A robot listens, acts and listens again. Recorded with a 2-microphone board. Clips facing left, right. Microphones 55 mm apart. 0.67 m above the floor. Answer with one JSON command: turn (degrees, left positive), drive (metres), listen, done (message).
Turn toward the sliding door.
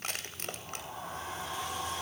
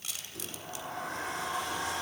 {"turn": -75}
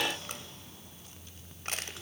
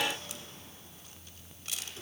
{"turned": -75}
{"listen": true}
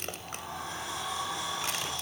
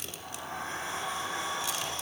{"turn": -30}
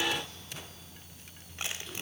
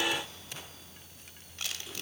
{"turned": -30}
{"listen": true}
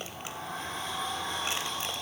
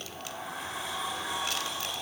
{"done": "Found it: a sliding door, straight ahead."}